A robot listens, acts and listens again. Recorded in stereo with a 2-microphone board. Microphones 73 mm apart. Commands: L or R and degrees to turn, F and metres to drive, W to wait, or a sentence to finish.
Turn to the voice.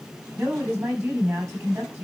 R40
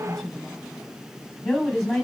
Facing the woman speaking.